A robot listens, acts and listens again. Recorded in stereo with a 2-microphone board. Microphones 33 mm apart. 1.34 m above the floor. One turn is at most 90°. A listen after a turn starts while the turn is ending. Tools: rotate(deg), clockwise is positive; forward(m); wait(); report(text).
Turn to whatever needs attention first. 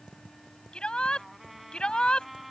rotate(-30)
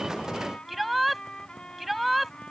report("Facing the shout.")